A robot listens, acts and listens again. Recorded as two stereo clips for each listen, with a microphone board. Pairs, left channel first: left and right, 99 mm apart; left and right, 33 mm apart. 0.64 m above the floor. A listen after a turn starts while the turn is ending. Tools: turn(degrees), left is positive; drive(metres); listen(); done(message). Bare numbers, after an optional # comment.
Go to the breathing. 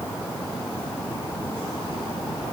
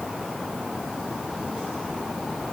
listen()
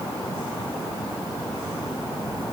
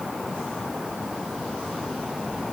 listen()
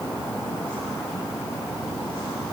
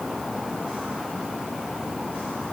done("I can't make out breathing to turn to.")